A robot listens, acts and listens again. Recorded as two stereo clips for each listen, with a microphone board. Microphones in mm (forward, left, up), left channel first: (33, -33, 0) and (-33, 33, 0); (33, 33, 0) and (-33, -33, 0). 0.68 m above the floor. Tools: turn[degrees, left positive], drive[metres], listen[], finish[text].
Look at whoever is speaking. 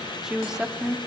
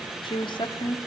Thought: The woman speaking: 55° left.
Action: turn[55]
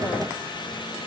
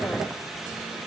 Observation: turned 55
Action: listen[]
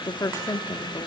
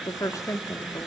Action: finish[Found it: a woman speaking, straight ahead.]